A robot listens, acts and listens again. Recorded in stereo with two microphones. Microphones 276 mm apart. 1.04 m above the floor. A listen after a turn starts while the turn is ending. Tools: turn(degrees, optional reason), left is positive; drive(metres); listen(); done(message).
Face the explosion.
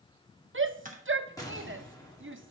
turn(degrees=30)
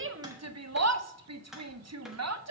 listen()
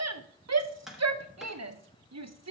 done("I heard an explosion, but can't make it out now. It was about 20° right or 140° left.")